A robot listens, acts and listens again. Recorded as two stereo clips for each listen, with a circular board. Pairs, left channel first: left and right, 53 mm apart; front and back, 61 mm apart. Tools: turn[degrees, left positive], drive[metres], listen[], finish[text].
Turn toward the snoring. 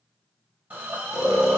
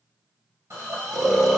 Thought: The snoring: 90° left.
Action: turn[90]
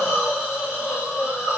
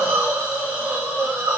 Action: listen[]
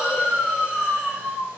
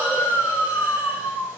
Action: finish[Facing the snoring.]